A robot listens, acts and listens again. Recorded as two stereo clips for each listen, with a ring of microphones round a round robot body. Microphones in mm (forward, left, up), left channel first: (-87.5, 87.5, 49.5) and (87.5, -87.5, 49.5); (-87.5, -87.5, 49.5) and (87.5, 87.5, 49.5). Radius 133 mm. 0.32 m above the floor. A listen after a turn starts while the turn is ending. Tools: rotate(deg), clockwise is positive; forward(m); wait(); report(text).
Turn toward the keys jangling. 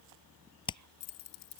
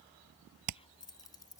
rotate(-150)
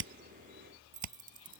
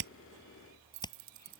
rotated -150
rotate(-10)
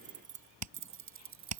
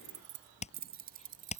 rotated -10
rotate(15)
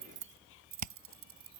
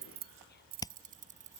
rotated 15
rotate(15)
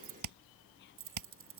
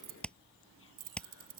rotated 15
rotate(10)
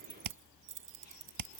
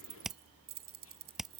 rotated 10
report("Facing the keys jangling.")